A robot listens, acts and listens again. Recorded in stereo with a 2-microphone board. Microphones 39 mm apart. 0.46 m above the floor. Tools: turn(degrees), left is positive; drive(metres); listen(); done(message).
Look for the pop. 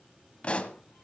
turn(degrees=30)
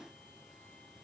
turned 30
listen()
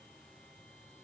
done("I heard a pop, but can't make it out now. It was about straight ahead or 120° left.")